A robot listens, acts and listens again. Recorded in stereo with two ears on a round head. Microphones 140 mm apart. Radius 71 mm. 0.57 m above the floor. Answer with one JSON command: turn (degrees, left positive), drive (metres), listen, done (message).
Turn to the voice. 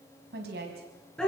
{"turn": -90}
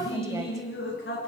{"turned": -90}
{"listen": true}
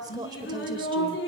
{"turn": -25}
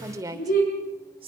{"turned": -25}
{"turn": -35}
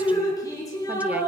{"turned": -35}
{"listen": true}
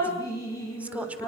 {"turn": -10}
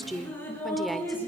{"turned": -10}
{"done": "Found it: a woman speaking, straight ahead."}